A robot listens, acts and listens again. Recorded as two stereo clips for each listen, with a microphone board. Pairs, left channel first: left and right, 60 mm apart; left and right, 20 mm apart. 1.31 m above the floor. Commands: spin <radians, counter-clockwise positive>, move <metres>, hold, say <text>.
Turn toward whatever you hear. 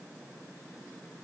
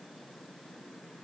hold
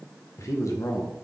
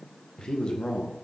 spin 1.13
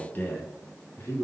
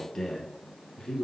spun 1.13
spin 0.70
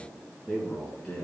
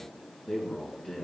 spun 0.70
spin 0.17
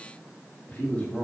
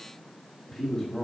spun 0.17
spin 0.26
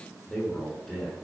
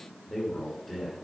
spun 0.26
say Facing the man speaking.